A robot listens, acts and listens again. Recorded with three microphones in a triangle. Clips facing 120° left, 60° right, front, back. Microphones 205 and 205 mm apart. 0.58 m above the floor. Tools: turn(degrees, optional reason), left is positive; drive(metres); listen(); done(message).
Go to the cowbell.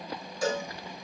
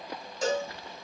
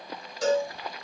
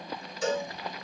drive(metres=1.0)
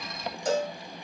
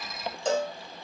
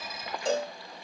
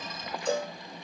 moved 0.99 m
drive(metres=1.0)
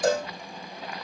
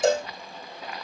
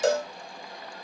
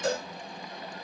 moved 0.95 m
drive(metres=1.0)
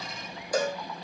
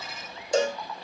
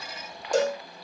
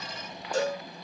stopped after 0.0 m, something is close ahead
done("Arrived at the cowbell, straight ahead.")